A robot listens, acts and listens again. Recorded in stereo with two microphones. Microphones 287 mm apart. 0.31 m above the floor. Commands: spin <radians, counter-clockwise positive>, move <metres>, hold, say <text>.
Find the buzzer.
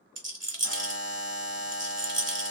spin 0.87
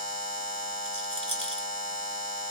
spin 1.31
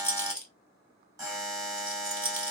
spin -0.17
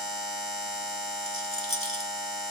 say Facing the buzzer, 1 to 2 m away.